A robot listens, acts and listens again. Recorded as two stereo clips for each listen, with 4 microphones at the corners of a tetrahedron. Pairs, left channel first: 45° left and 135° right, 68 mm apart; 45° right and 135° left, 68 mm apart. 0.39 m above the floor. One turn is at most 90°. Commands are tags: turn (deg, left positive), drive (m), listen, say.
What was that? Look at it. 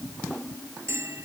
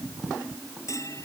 <turn deg="-85"/>
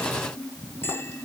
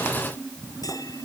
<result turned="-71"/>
<turn deg="-15"/>
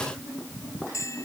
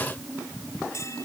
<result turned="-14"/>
<say>Facing the bell.</say>